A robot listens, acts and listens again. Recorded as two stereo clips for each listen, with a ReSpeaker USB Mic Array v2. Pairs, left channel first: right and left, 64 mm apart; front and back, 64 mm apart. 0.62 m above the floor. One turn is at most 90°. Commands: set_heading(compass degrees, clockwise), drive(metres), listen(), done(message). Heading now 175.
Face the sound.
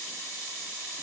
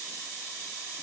listen()
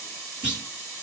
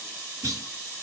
set_heading(85)
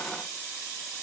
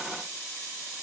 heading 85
set_heading(10)
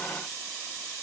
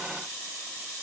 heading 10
done("Facing where the clunk came from. I can't hear it now.")